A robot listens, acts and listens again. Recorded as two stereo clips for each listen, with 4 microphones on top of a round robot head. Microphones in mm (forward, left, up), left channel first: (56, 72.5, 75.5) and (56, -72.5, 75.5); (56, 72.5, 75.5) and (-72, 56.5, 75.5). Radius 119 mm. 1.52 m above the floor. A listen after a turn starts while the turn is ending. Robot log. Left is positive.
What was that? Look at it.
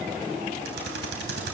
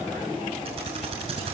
note: The typing on a keyboard: 110° right.
cmd yaw -110
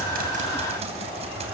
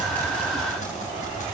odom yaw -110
note: The typing on a keyboard is now 45° right.
cmd yaw -45
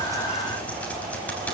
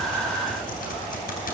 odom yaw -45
note: The typing on a keyboard is now 10° left.
cmd yaw +10
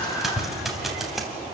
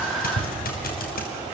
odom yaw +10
end: Found it: typing on a keyboard, straight ahead, 2 to 4 m away.